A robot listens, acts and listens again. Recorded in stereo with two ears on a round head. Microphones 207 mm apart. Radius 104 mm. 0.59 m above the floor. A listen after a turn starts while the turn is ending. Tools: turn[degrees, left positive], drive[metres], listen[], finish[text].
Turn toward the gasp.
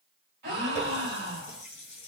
Thought: The gasp: about 45° right or 135° right.
Action: turn[-45]
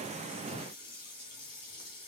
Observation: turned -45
Action: listen[]
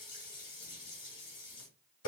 Action: finish[I heard a gasp, but can't make it out now. It was about straight ahead or 90° right.]